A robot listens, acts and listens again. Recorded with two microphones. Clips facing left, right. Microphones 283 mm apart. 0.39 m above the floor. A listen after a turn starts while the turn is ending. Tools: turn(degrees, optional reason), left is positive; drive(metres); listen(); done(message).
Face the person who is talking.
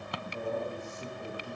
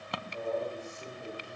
turn(degrees=50, reason="The man speaking: about 50° left or 130° left.")
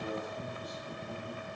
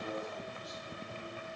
listen()
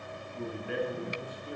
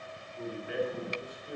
turn(degrees=70, reason="So it is at 70° left.")
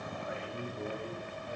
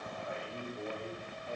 done("Found it: a man speaking, straight ahead, 1 to 2 m away.")